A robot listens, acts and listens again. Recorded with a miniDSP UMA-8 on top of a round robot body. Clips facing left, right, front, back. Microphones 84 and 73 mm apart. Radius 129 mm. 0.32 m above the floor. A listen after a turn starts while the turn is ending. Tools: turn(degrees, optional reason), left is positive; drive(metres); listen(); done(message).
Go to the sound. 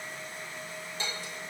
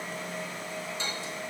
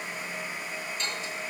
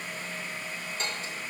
turn(degrees=125, reason="The dishes clattering: 125° left.")
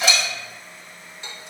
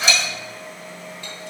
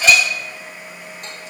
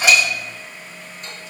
listen()
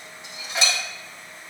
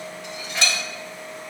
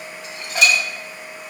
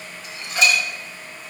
turn(degrees=20, reason="The dishes clattering is now 20° left.")
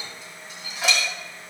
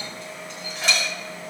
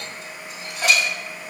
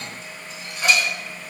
drive(metres=1.0)
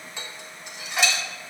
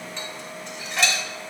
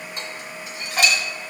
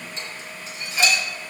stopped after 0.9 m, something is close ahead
turn(degrees=10, reason="The dishes clattering is now 10° left.")
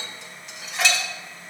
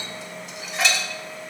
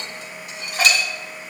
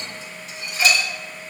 done("I am next to the dishes clattering.")